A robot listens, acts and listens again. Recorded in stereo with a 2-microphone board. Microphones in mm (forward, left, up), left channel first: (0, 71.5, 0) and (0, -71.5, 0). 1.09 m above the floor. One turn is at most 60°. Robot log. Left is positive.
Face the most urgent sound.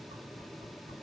cmd idle
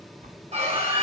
note: The scream: about 50° right or 130° right.
cmd yaw -50
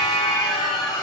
end: Facing the scream, over 4 m away.